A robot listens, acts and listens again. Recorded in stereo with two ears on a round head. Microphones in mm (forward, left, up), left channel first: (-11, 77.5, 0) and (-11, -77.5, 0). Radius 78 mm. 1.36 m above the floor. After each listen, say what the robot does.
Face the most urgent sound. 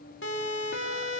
Turn 70° left.
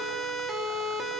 Found it: a siren, straight ahead.